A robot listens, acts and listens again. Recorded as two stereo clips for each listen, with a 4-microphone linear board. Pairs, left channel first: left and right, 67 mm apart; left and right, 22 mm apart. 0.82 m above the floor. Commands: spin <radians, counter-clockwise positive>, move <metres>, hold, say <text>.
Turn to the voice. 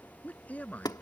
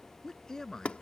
spin 0.35
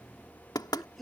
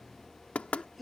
say Found it: a man speaking, straight ahead.